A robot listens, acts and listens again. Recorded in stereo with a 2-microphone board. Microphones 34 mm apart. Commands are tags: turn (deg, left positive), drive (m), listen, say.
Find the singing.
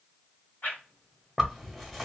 <listen/>
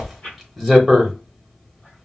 <listen/>
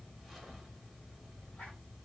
<say>I can't make out singing to turn to.</say>